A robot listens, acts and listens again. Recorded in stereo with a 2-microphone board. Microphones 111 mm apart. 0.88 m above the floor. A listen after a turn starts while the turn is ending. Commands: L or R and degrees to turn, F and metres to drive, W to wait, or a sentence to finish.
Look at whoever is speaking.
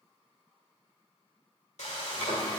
W
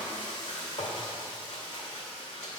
W
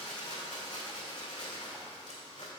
I can't make out anyone speaking, only frying.